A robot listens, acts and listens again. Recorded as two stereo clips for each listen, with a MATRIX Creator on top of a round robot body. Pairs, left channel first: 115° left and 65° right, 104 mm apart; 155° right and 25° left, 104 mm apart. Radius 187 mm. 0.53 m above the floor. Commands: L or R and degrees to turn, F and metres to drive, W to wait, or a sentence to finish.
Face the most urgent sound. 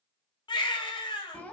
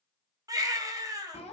L75
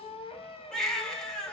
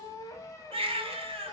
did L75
L30
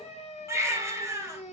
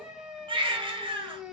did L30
Found it: a baby crying, straight ahead, under 1 m away.